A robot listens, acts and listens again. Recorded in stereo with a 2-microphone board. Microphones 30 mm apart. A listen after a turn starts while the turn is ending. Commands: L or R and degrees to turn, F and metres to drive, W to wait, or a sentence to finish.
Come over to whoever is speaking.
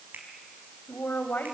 L65
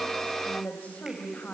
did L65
L50
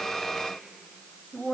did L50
F1.0
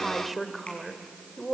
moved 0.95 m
F1.0
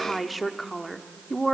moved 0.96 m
F1.0
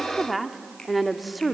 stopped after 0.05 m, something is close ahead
Arrived at the woman speaking, straight ahead.